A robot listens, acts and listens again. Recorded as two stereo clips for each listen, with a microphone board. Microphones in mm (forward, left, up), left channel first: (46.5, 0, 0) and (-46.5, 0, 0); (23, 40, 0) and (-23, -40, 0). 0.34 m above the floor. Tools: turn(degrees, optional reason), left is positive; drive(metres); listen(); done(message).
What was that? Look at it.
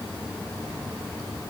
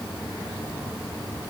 listen()
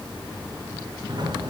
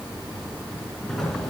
turn(degrees=145, reason="The sliding door: 145° left.")
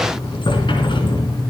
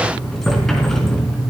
turn(degrees=-25, reason="The sliding door is now 25° right.")
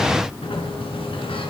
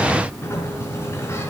done("Facing the sliding door.")